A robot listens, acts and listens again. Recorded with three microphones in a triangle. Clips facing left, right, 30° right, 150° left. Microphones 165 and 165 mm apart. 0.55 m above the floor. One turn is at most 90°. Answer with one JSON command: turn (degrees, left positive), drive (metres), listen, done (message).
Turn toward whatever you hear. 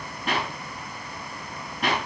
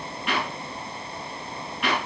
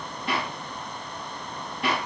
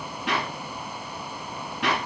{"turn": 90}
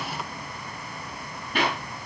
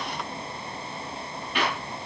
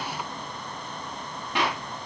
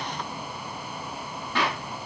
{"turn": 45}
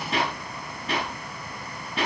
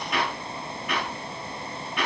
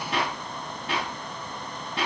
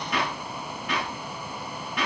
{"turn": 30}
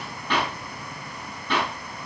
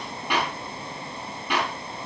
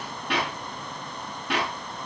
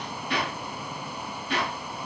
{"turn": -10}
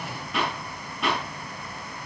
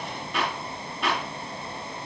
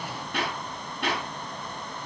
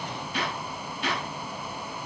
{"done": "Found it: a clap, straight ahead."}